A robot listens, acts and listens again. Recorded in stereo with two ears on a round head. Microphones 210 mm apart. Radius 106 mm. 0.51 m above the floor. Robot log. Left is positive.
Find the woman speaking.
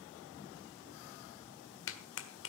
cmd idle
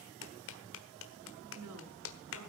cmd yaw -90
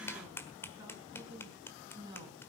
note: So it is at 20° right.
cmd yaw -20
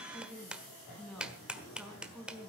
end: Facing the woman speaking, over 4 m away.